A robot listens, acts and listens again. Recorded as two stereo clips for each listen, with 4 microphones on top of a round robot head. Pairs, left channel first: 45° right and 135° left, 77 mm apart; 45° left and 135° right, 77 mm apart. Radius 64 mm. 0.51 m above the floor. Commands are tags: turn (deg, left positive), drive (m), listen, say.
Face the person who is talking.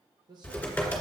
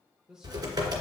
<turn deg="145"/>
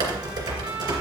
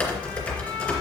<listen/>
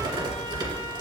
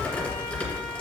<listen/>
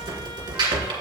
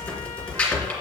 <say>I heard a man speaking from this way, but can't make it out now.</say>